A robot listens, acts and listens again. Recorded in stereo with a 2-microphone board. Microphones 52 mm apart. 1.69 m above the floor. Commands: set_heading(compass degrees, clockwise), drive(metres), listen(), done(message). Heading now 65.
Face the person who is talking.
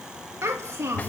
set_heading(135)
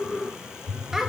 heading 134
set_heading(144)
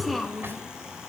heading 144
done("Found it: a child speaking, straight ahead, 1 to 2 m away.")